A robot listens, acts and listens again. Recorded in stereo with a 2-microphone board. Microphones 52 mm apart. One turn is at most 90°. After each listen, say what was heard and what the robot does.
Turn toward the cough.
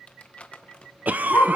The cough: about 35° right or 145° right. Turn 35° right.
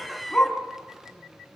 Facing the cough, under 1 m away.